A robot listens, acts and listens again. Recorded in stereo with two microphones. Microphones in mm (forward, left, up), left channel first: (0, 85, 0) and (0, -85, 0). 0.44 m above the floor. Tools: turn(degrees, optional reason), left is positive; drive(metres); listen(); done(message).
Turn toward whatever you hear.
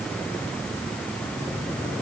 listen()
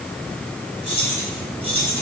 turn(degrees=35, reason="The keys jangling: about 35° left or 145° left.")
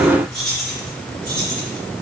done("Facing the keys jangling, over 4 m away.")